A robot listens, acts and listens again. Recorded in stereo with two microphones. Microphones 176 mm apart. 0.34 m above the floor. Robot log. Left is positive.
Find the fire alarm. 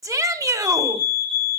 note: The fire alarm: about 30° right or 150° right.
cmd yaw -30
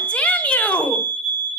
note: So it is at 115° right.
cmd yaw -115
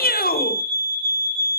note: The fire alarm is now 35° right.
cmd yaw -35
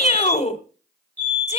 note: The fire alarm is now 10° left.
cmd yaw +10
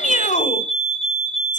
end: Found it: a fire alarm, straight ahead.